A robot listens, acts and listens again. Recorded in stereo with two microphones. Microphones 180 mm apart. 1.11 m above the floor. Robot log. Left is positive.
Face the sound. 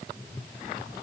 cmd idle
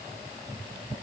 cmd idle
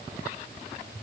end: I can't make out anything to turn to.